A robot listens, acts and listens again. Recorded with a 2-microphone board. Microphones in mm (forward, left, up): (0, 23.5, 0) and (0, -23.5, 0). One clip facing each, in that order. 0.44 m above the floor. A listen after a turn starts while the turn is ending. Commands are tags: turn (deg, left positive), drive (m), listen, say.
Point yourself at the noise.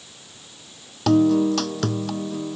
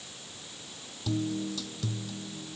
<turn deg="65"/>
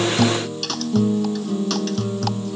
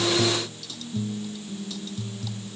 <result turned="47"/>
<turn deg="70"/>
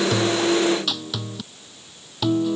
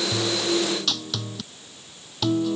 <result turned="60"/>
<turn deg="10"/>
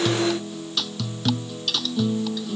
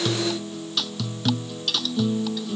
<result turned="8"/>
<say>Found it: a guitar, straight ahead.</say>